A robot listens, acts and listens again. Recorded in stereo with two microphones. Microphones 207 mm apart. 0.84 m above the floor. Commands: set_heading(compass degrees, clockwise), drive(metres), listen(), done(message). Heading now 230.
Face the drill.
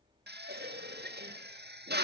set_heading(290)
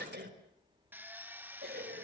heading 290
listen()
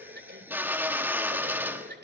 set_heading(300)
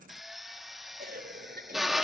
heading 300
done("Found it: a drill, straight ahead.")